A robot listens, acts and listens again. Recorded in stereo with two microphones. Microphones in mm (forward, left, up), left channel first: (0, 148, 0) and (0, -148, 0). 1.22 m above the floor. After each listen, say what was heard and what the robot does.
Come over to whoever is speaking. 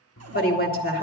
The woman speaking: about 30° left or 150° left. Turn 30° left.
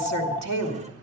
So it is at 120° left. Turn 120° left.
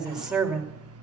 Drive 1.0 m forward.
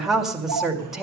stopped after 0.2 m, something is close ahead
Something is in my way. I am facing the woman speaking but have not reached it.